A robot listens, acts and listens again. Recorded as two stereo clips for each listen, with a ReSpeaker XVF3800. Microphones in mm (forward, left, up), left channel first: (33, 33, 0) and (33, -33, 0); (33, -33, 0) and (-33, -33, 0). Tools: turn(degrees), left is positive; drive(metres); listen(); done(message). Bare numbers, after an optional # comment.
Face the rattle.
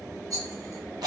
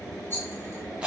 # The rattle: 60° right.
turn(-60)
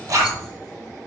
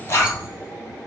listen()
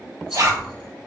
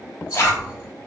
# The rattle is now 10° right.
turn(-10)
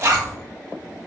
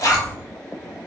listen()
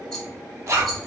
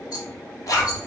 done("Facing the rattle, 1 to 2 m away.")